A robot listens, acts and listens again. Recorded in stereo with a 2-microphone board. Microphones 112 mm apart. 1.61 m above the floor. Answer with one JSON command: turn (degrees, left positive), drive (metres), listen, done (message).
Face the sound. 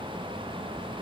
{"listen": true}
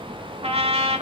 {"turn": -60}
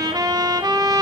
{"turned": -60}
{"turn": -40}
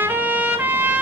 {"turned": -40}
{"turn": -15}
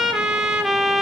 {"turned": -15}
{"done": "Facing the trumpet, 1 to 2 m away."}